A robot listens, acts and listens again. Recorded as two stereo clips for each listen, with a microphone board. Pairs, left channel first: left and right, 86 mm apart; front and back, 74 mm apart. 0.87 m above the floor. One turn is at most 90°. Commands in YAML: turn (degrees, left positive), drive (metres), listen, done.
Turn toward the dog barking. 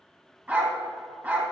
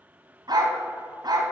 turn: -90
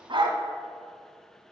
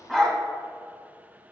turn: -90
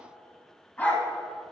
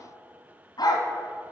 turn: 20
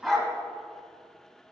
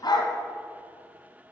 done: "Facing the dog barking, 1 to 2 m away."